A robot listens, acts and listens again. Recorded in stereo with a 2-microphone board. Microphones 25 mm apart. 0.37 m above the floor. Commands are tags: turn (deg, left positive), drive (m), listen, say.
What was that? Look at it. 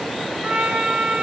<turn deg="-70"/>
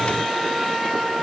<turn deg="-15"/>
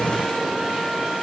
<listen/>
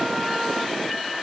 <listen/>
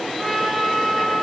<say>Found it: a trumpet, straight ahead, 2 to 4 m away.</say>